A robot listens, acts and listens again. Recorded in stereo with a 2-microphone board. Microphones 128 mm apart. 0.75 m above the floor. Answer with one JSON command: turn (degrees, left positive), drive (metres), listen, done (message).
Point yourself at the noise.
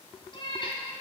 {"turn": 45}
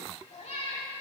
{"turn": 70}
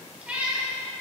{"turn": -15}
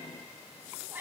{"turn": -20}
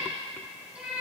{"turn": -10}
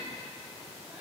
{"listen": true}
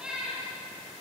{"turn": -10}
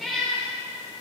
{"done": "Found it: a cat meowing, straight ahead, 2 to 4 m away."}